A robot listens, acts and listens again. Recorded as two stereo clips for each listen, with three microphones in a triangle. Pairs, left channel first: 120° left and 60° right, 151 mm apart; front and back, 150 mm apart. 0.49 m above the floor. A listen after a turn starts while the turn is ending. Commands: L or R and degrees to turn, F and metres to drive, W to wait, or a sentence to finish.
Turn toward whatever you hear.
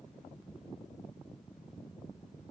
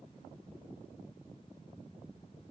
W
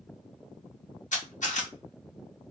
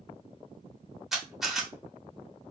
L95
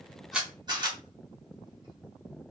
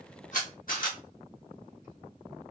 Found it: a camera shutter, straight ahead, under 1 m away.